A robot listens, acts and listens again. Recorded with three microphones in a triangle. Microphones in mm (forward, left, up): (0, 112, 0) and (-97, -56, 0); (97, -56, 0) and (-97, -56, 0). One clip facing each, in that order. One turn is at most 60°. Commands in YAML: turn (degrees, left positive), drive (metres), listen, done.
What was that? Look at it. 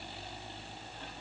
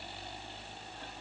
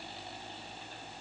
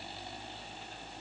listen: true
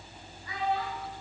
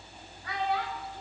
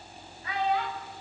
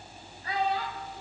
turn: -60
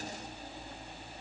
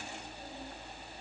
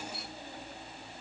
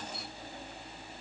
turn: -60
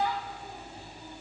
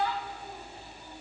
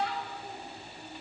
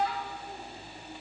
turn: -15
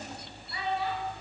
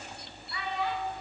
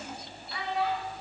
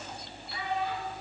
done: "Facing the child speaking, over 4 m away."